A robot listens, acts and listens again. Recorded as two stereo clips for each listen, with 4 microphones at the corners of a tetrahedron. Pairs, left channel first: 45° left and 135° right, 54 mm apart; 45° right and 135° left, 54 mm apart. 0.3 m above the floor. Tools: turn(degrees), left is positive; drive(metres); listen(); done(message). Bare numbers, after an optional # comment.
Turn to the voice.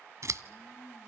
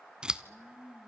listen()
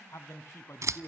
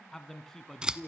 # The man speaking: 35° left.
turn(35)
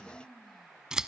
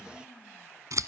listen()
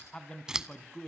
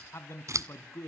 # The man speaking is now 25° right.
turn(-25)
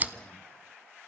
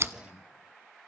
listen()
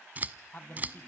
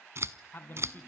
done("Found it: a man speaking, straight ahead, 2 to 4 m away.")